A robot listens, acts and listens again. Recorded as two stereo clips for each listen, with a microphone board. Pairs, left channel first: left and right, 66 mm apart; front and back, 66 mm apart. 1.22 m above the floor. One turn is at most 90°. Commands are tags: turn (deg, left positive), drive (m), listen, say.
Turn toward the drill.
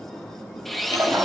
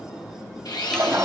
<say>Found it: a drill, straight ahead.</say>